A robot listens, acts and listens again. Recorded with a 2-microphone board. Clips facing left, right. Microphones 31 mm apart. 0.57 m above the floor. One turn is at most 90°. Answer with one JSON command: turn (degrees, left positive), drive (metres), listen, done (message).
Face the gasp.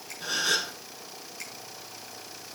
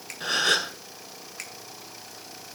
{"turn": -50}
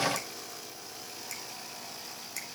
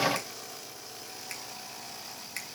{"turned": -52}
{"listen": true}
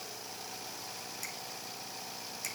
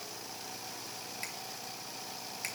{"done": "I heard a gasp, but can't make it out now. It was about 5° left or 80° right."}